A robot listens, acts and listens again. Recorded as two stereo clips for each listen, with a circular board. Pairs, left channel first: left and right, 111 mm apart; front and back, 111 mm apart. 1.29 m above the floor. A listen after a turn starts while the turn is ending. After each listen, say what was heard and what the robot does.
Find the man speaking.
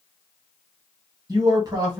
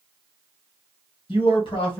The man speaking: 35° right. Turn 35° right.
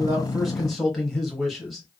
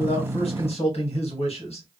Facing the man speaking, 1 to 2 m away.